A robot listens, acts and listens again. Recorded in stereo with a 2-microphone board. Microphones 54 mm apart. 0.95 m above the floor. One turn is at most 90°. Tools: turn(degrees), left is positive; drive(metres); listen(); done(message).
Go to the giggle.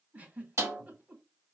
turn(degrees=-30)
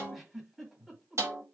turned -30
drive(metres=1.0)
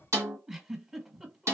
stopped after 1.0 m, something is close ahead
turn(degrees=-15)
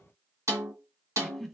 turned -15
done("I am next to the giggle.")